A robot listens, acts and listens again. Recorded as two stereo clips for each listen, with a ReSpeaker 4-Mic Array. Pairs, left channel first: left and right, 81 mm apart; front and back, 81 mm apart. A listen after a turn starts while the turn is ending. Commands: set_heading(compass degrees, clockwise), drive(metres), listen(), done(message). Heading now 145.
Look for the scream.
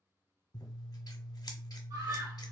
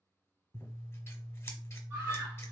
set_heading(270)
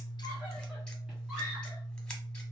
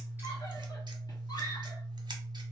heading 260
set_heading(270)
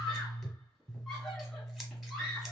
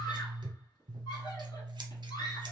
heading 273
done("Facing the scream.")